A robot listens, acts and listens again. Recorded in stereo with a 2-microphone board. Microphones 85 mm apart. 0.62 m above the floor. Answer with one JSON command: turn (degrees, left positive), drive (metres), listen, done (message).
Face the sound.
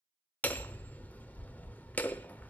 {"turn": 20}
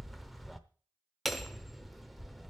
{"done": "Facing the hammering, under 1 m away."}